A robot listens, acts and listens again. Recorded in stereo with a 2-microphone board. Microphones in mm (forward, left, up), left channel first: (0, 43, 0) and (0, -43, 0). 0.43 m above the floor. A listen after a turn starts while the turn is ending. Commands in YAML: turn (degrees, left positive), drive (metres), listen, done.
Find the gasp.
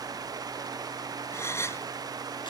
turn: 30
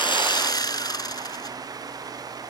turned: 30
listen: true
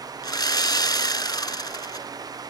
done: "I heard a gasp, but can't make it out now. It was about straight ahead or 120° left."